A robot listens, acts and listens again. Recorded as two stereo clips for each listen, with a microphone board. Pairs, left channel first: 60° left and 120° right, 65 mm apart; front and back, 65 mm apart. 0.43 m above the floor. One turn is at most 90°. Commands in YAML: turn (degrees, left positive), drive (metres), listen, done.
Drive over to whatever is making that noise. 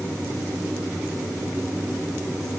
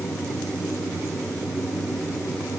listen: true
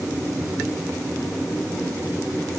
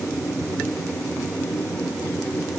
listen: true
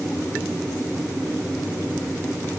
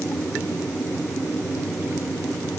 done: "I can't make out anything to turn to."